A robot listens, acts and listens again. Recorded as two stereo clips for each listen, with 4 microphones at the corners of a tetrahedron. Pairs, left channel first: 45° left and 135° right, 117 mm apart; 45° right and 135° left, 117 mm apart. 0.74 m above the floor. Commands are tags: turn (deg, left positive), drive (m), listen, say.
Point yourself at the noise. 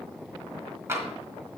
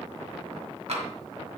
<turn deg="155"/>
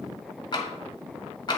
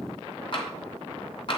<say>Found it: tapping, straight ahead.</say>